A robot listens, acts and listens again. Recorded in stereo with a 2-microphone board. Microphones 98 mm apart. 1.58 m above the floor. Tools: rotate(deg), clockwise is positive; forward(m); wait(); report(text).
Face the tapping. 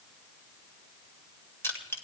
wait()
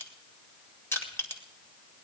wait()
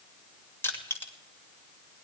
report("I can't make out tapping to turn to.")